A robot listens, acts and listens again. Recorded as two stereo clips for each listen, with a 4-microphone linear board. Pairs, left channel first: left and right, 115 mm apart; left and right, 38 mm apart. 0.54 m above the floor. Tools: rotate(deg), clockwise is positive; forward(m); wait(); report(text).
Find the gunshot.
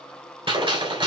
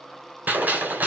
rotate(45)
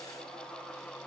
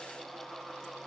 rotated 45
wait()
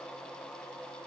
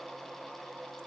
report("I heard a gunshot, but can't make it out now. It was about straight ahead or 90° right.")